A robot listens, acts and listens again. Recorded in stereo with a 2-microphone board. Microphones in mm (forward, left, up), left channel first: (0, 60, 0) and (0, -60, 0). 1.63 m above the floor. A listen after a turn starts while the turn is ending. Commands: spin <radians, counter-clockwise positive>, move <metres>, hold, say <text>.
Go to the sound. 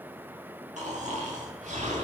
spin -1.22
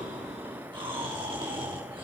spin -0.70
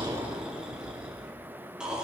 move 1.0
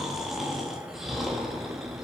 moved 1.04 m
move 1.0
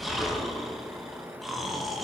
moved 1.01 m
move 1.0
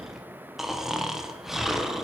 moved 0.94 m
move 1.0
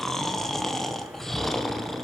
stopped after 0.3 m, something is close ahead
say I am next to the snoring.